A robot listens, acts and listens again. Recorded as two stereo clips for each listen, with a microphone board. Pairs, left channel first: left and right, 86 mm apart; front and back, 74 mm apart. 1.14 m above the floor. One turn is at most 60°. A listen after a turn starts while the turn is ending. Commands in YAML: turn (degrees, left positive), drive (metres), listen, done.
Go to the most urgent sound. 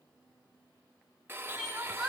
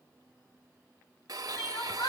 drive: 1.0
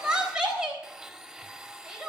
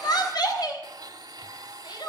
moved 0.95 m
turn: -10
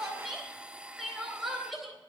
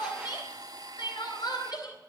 drive: 1.0
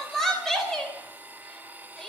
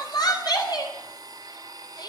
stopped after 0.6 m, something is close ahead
done: "Blocked. The crying is further on, straight ahead."